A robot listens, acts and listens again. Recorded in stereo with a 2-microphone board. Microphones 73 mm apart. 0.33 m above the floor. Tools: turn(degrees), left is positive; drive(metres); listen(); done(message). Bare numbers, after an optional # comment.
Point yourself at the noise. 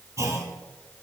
# The clunk: about 45° right or 135° right.
turn(-45)
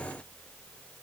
listen()
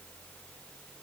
done("I heard a clunk, but can't make it out now. It was about straight ahead or 90° right.")